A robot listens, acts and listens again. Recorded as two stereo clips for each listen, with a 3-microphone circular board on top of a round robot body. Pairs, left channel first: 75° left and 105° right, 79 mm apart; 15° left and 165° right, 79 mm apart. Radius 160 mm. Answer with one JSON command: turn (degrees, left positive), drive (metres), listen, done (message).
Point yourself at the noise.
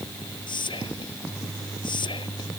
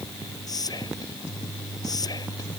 {"turn": 55}
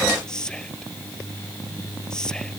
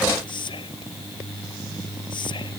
{"turn": -10}
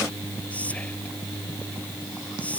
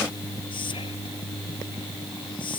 {"done": "Facing the whispering."}